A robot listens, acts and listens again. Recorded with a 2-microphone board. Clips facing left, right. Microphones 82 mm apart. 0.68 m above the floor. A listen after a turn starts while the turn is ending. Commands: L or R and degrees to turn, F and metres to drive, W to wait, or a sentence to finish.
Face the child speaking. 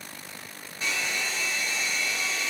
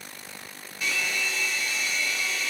W
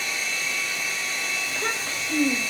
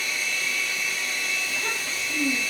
L50
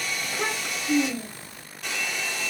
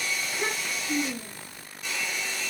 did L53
L85
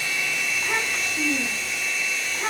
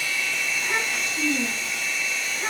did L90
L10
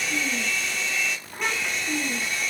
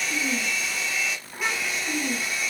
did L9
Facing the child speaking, 2 to 4 m away.